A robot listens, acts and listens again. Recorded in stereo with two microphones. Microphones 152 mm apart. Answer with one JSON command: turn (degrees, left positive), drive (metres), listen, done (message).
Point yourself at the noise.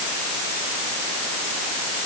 {"listen": true}
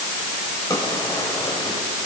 {"turn": 25}
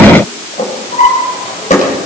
{"turn": 130}
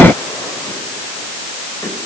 {"listen": true}
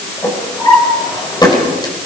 {"turn": 25}
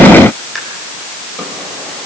{"done": "Found it: a drawer, straight ahead."}